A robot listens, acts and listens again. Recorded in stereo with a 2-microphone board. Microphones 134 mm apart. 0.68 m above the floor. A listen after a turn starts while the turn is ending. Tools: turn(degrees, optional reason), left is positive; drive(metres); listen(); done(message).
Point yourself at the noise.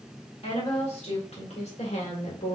turn(degrees=65, reason="The woman speaking: about 65° left or 115° left.")
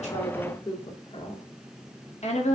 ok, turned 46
turn(degrees=65, reason="So it is at 65° left.")
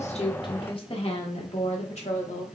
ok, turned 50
turn(degrees=65, reason="The woman speaking is now 65° left.")
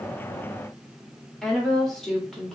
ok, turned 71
done("Found it: a woman speaking, straight ahead.")